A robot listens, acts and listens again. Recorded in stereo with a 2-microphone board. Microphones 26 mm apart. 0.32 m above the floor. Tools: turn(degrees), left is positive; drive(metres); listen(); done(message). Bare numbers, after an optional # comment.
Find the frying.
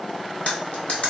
listen()
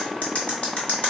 listen()
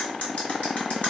done("I can't make out frying, only cutlery clinking.")